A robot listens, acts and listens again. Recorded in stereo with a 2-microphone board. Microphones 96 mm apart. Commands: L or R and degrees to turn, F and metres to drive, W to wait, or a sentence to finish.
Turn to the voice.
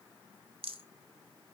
W
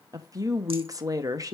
R35
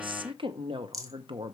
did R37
R100
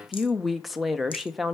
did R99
Facing the woman speaking, under 1 m away.